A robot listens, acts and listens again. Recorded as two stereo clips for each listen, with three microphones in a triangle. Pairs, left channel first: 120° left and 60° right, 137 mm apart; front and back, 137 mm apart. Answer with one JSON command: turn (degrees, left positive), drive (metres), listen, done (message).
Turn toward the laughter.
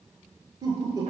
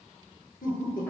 {"done": "Found it: laughter, straight ahead, over 4 m away."}